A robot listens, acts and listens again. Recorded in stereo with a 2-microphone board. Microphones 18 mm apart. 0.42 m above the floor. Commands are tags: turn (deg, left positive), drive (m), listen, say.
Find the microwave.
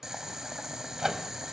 <turn deg="-30"/>
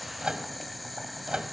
<turn deg="-115"/>
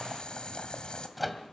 <say>Found it: a microwave, straight ahead.</say>